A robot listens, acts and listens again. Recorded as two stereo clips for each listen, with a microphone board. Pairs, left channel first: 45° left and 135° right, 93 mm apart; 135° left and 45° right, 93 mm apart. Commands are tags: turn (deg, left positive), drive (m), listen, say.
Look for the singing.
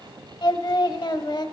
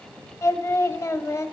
<turn deg="80"/>
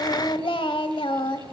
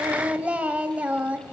<turn deg="30"/>
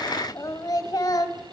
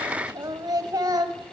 <say>Facing the singing, under 1 m away.</say>